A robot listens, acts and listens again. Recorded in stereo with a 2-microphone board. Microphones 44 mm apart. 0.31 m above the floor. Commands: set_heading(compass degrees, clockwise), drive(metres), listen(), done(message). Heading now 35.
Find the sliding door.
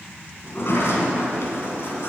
set_heading(330)
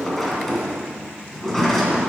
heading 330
set_heading(320)
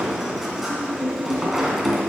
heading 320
done("Found it: a sliding door, straight ahead, 2 to 4 m away.")